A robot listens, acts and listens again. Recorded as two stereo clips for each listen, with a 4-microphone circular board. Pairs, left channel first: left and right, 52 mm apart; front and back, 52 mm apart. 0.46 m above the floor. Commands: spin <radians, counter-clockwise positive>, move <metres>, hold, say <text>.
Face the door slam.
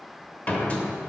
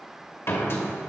spin 0.52
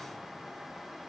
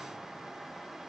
say Facing where the door slam came from. I can't hear it now.